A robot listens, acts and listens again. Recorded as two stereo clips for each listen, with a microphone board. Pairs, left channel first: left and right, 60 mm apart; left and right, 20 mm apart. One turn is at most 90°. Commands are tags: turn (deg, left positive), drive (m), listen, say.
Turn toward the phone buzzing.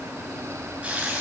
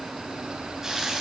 <listen/>
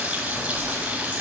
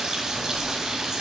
<turn deg="55"/>
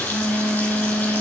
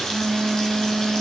<say>Facing the phone buzzing, 2 to 4 m away.</say>